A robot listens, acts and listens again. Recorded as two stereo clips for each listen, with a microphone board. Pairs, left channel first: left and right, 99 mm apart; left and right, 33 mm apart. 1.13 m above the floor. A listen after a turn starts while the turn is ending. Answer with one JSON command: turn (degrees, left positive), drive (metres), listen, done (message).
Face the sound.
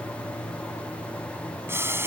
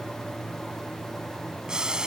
{"turn": -25}
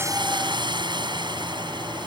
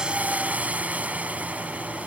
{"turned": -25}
{"turn": -130}
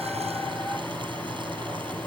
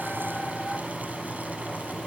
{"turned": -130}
{"listen": true}
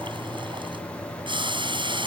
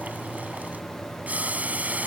{"turn": -50}
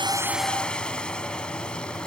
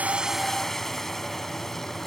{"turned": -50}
{"listen": true}
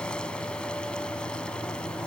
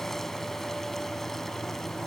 {"listen": true}
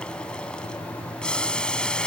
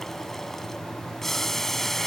{"turn": 10}
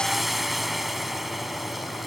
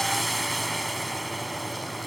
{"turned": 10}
{"done": "Found it: boiling, straight ahead."}